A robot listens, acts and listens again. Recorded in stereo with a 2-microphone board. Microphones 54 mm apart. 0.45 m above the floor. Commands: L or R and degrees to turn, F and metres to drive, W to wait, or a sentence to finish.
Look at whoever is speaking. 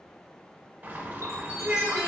R25
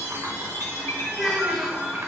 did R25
Found it: a child speaking, straight ahead.